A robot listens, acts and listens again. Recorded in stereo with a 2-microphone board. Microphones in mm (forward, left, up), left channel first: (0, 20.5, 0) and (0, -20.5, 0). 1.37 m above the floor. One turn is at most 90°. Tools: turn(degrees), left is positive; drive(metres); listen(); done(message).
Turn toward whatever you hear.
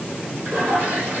turn(degrees=-65)
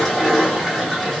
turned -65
done("Found it: a toilet flushing, straight ahead, 1 to 2 m away.")